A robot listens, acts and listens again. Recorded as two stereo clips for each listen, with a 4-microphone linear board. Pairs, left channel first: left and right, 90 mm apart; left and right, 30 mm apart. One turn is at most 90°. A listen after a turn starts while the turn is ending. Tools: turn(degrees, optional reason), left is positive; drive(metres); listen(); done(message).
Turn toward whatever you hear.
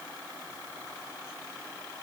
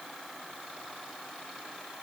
listen()
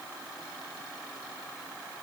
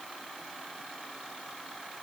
listen()
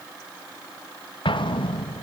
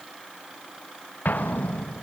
turn(degrees=90)
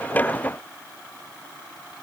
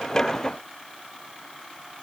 done("Facing where the explosion came from. I can't hear it now.")